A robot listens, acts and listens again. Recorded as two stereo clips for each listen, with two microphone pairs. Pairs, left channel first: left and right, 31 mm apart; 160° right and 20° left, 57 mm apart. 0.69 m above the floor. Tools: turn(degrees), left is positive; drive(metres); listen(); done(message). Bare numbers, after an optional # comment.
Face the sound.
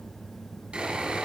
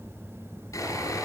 # The sawing: 145° right.
turn(-145)
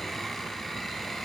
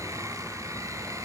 # The sawing is now 10° left.
turn(10)
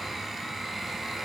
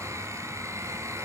done("Facing the sawing.")